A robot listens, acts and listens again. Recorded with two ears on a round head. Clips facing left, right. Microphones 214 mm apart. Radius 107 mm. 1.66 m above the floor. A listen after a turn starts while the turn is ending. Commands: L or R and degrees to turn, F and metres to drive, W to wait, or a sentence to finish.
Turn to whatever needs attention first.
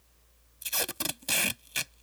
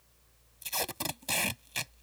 W
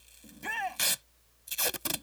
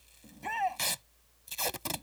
L20
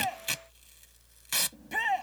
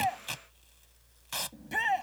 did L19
Facing the shout.